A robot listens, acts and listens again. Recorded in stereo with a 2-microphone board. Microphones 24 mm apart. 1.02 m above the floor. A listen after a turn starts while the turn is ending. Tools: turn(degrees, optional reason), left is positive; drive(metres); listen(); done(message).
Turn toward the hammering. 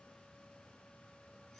listen()
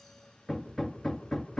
turn(degrees=20, reason="The hammering: about 20° left or 160° left.")
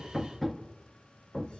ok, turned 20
done("Facing the hammering, under 1 m away.")